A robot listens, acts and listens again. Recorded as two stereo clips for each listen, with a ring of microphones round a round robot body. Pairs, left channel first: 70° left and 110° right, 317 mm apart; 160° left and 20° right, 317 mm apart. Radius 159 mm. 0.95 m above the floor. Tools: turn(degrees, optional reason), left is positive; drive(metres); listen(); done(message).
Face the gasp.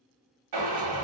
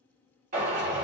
listen()
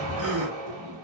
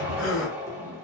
turn(degrees=-155, reason="The gasp: 155° right.")
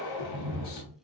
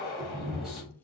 done("Facing where the gasp came from. I can't hear it now.")